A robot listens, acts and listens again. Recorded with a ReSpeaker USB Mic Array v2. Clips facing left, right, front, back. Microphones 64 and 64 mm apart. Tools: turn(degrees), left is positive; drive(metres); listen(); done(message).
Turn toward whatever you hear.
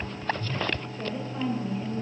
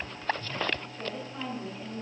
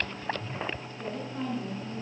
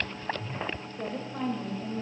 turn(degrees=170)
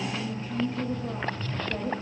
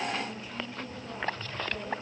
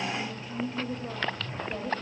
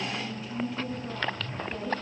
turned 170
turn(degrees=50)
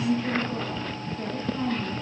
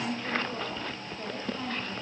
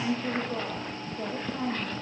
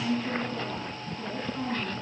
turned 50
done("Facing the woman speaking.")